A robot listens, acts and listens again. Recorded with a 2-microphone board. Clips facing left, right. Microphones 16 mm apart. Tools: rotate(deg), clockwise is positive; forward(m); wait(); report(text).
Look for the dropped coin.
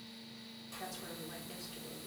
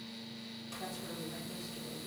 wait()
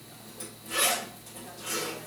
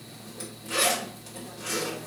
wait()
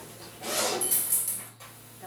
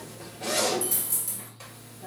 rotate(-20)
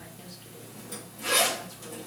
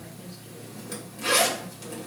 wait()
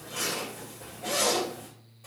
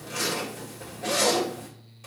report("I heard a dropped coin, but can't make it out now. It was about straight ahead or 140° left.")